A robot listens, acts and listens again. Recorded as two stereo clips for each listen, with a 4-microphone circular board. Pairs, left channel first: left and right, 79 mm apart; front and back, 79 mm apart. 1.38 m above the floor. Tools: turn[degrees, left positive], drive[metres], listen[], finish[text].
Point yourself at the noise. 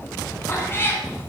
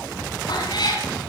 Thought: The cat meowing: 30° left.
Action: turn[30]
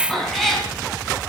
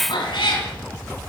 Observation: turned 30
Action: finish[Found it: a cat meowing, straight ahead.]